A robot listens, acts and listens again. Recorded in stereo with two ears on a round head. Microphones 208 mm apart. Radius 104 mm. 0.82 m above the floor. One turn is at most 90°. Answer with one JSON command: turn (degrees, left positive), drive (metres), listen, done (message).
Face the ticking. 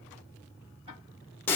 {"turn": -30}
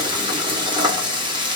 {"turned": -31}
{"listen": true}
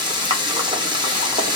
{"listen": true}
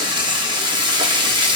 {"done": "I heard ticking, but can't make it out now. It was about 5° left or 120° right."}